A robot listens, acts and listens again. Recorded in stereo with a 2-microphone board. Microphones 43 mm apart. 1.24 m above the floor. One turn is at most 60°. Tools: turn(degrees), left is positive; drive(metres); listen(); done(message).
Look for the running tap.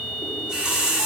turn(degrees=-15)
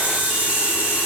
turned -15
turn(degrees=-60)
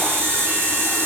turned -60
turn(degrees=-60)
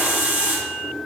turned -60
turn(degrees=-50)
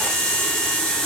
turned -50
turn(degrees=15)
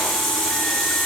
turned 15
done("Found it: a running tap, straight ahead, 2 to 4 m away.")